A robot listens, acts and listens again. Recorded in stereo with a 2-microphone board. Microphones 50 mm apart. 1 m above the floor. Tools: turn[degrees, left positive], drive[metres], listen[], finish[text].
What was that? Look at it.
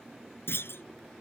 Thought: The clunk: about 50° left or 130° left.
Action: turn[50]
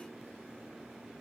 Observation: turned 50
Action: listen[]
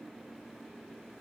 Action: finish[I heard a clunk, but can't make it out now. It was about straight ahead or 80° left.]